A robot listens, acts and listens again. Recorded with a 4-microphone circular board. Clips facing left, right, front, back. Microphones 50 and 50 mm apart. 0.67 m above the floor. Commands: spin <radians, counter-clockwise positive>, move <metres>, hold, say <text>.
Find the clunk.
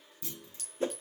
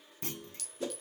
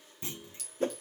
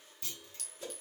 spin -1.05
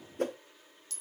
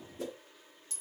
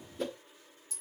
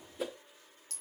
say Facing where the clunk came from. I can't hear it now.